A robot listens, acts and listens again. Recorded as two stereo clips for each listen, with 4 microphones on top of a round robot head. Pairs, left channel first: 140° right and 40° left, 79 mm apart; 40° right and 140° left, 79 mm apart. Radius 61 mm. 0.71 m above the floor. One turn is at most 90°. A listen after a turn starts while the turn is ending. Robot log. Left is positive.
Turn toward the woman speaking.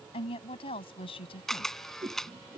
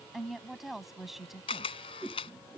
note: The woman speaking: 135° right.
cmd yaw -90
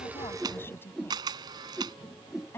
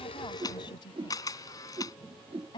note: The woman speaking is now 75° right.
cmd yaw -75
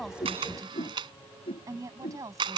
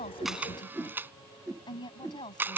note: The woman speaking is now 10° right.
cmd yaw -10
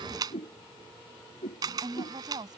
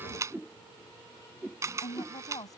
end: Found it: a woman speaking, straight ahead.